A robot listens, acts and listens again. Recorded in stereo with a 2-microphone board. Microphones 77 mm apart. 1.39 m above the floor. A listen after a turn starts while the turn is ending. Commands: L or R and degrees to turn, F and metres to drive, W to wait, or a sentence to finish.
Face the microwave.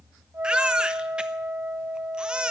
W
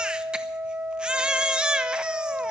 W
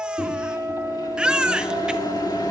L65
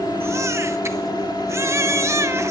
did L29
L85
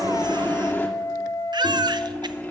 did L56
L25
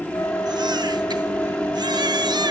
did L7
L20
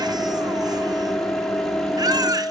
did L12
Facing the microwave.